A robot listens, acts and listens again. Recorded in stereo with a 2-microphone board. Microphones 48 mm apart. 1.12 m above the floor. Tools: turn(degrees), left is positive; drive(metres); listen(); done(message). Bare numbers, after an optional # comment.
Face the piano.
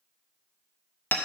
listen()
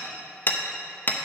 listen()
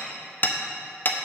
done("I can't make out a piano to turn to.")